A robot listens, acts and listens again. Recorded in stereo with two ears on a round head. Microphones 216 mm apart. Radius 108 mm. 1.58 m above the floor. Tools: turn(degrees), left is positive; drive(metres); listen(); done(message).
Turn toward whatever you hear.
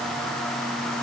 listen()
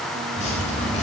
turn(degrees=30)
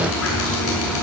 turn(degrees=120)
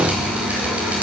done("Facing the dripping.")